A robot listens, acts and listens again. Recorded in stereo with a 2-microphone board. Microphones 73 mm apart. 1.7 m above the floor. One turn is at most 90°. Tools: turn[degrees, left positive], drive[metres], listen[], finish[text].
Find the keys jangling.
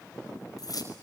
Thought: The keys jangling: about 55° left or 125° left.
Action: turn[55]
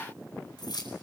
Thought: So it is at 65° left.
Action: turn[65]
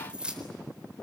Thought: The keys jangling is now 15° right.
Action: turn[-15]
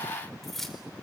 Action: finish[Found it: keys jangling, straight ahead, 2 to 4 m away.]